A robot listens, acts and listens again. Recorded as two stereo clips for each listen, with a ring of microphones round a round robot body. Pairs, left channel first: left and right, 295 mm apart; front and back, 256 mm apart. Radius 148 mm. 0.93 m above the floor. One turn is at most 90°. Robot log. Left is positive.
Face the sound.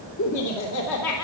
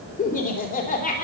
note: The laughter: 60° left.
cmd yaw +60
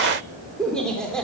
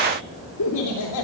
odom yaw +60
end: Facing the laughter.